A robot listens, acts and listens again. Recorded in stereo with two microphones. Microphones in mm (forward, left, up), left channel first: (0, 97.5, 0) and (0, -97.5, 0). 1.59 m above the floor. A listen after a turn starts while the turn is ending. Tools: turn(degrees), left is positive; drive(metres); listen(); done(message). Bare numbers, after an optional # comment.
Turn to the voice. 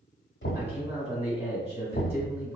# The man speaking: about 30° right or 150° right.
turn(-30)
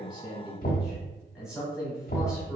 done("Facing the man speaking.")